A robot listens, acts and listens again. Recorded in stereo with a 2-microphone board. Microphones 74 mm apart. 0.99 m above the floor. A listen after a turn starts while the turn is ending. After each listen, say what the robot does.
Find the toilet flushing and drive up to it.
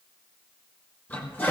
Turn 25° left.
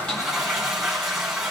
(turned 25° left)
Drive 1.0 m forward.
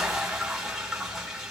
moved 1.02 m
Drive 1.0 m forward.
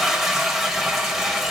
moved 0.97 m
Drive 1.0 m forward.
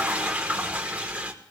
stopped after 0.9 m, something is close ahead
Turn 20° right.
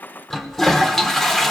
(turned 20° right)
Arrived at the toilet flushing, straight ahead.